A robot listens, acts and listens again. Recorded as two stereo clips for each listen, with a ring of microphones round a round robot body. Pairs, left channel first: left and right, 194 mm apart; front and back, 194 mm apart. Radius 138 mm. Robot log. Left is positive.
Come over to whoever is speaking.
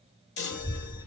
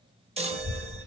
note: The child speaking: 170° right.
cmd yaw -170
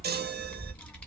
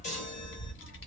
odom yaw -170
note: The child speaking is now 10° left.
cmd yaw +10
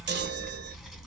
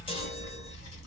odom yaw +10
cmd fwd 1.0
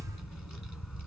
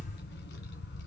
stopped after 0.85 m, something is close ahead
end: Arrived at the child speaking, straight ahead.